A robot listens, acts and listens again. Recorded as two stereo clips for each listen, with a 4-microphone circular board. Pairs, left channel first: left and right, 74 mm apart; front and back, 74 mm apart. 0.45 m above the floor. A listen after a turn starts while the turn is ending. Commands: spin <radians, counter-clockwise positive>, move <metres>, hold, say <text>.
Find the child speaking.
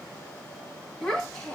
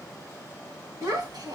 spin 2.97
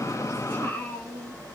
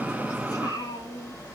spin 0.44
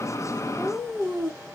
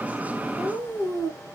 spin -0.17
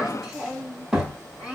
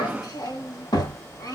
say Found it: a child speaking, straight ahead.